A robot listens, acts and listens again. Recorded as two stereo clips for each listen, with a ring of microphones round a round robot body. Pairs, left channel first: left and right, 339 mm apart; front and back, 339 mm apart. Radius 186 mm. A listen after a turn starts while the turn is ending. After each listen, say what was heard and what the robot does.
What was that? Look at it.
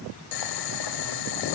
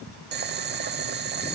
The boiling: 120° left. Turn 120° left.
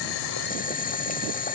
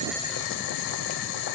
The boiling is now 25° left. Turn 25° left.
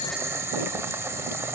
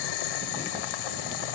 Facing the boiling, under 1 m away.